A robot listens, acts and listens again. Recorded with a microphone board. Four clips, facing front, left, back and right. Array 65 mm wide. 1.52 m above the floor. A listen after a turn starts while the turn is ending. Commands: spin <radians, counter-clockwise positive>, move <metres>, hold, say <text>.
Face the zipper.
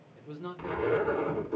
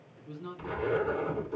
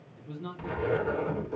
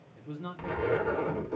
spin -1.40
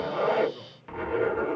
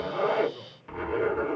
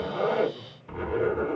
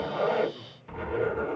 spin 0.17
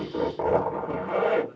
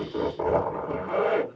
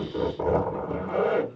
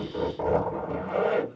say Facing the zipper.